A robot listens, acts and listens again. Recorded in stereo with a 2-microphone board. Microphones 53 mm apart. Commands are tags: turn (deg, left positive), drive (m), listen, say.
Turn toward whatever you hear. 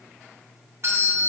<turn deg="-55"/>
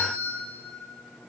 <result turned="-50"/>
<turn deg="-60"/>
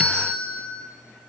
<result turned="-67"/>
<say>Facing the doorbell.</say>